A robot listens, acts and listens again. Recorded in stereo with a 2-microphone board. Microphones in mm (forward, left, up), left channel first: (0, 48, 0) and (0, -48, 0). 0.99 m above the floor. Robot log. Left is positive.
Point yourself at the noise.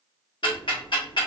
note: The ticking: about 55° left or 125° left.
cmd yaw +55
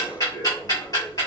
note: So it is at 50° left.
cmd yaw +50
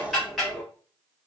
end: Found it: ticking, straight ahead, 1 to 2 m away.